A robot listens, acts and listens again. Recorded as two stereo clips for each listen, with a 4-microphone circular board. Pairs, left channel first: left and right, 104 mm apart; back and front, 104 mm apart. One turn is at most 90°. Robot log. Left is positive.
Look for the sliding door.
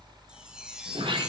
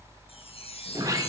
note: The sliding door: 55° right.
cmd yaw -55
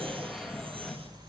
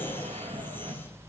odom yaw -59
end: Facing the sliding door, 1 to 2 m away.